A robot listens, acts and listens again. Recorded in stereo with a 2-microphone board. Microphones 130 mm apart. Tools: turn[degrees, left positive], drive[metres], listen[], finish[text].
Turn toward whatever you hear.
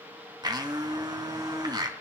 Thought: The blender: about 30° right or 150° right.
Action: turn[-30]
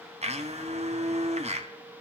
Thought: So it is at 115° right.
Action: turn[-115]
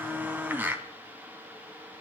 Thought: The blender is now 15° right.
Action: turn[-15]
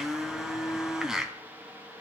Action: finish[Found it: a blender, straight ahead.]